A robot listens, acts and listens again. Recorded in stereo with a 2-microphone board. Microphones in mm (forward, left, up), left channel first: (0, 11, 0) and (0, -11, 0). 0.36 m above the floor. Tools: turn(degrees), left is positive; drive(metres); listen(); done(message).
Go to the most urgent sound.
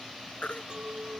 turn(degrees=75)
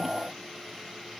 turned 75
listen()
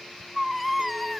drive(metres=1.0)
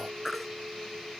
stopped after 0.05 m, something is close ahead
done("Blocked. The baby crying is further on, straight ahead.")